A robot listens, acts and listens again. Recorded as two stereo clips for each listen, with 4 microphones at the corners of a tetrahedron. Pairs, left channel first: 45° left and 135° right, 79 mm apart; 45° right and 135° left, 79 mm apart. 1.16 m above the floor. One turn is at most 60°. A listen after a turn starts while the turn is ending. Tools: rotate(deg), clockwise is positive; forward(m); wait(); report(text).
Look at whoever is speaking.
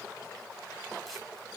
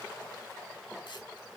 wait()
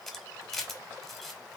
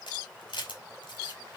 wait()
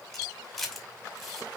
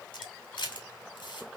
report("I can't make out anyone speaking to turn to.")